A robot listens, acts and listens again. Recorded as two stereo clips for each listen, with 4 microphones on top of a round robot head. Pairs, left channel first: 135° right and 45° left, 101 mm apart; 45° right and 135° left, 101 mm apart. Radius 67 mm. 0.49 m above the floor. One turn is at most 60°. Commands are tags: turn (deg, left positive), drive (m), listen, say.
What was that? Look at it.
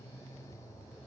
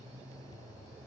<listen/>
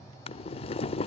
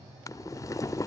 <turn deg="-60"/>
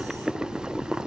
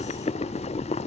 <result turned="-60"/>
<turn deg="-35"/>
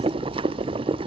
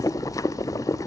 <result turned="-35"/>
<turn deg="10"/>
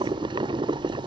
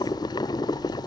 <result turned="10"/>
<say>Facing the boiling.</say>